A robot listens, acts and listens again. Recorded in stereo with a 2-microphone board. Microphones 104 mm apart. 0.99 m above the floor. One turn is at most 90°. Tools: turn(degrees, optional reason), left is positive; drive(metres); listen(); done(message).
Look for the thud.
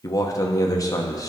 listen()
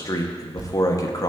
turn(degrees=-45, reason="The thud: about 45° right or 135° right.")
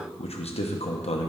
listen()
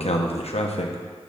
done("I heard a thud, but can't make it out now. It was about straight ahead or 90° right.")